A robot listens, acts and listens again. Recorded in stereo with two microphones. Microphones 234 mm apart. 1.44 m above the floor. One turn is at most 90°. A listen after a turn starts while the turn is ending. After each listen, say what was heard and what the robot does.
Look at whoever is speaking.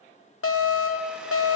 Keep listening.
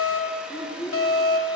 The child speaking: about 25° left or 155° left. Turn 25° left.
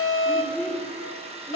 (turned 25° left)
Facing the child speaking, 1 to 2 m away.